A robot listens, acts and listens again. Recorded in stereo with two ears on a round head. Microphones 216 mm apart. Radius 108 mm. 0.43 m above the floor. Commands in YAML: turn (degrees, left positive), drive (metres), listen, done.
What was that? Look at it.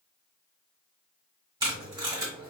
turn: -15
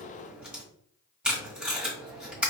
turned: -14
done: "Facing the tape being pulled."